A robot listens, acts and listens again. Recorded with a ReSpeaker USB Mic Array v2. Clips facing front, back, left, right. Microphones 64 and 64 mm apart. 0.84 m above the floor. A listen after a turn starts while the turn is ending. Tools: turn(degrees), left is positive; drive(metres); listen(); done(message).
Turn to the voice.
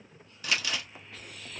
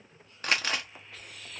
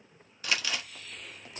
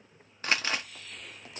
listen()
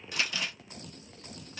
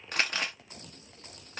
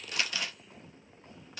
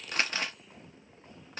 listen()
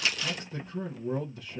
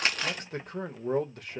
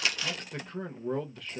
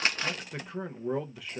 turn(degrees=-170)
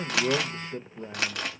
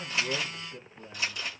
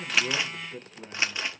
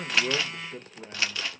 turn(degrees=-10)
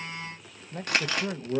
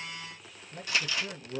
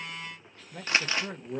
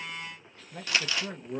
done("Found it: a man speaking, straight ahead.")